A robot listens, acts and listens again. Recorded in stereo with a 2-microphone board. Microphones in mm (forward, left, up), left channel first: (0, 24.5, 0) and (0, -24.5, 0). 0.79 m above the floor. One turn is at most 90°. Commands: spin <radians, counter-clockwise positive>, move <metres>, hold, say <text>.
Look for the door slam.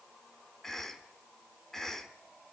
hold
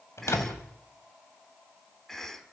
spin 1.22
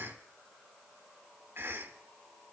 hold
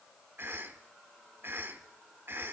say I heard a door slam, but can't make it out now. It was about straight ahead or 40° left.